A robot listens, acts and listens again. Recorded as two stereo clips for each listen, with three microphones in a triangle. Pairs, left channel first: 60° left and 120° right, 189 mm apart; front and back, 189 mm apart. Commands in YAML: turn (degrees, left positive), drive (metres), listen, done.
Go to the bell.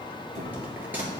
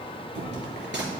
turn: 160
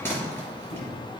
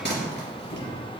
turn: -20
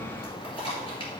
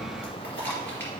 drive: 1.0
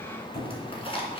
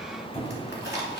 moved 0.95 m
drive: 1.0
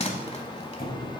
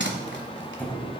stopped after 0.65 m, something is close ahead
done: "Arrived at the bell, straight ahead."